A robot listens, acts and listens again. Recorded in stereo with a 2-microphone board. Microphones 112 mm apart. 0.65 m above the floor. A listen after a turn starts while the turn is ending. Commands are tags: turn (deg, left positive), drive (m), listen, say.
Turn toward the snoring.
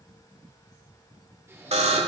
<turn deg="-20"/>
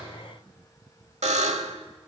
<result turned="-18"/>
<listen/>
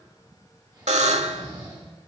<turn deg="-140"/>
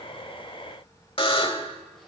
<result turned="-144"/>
<listen/>
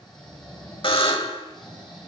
<say>Facing the snoring.</say>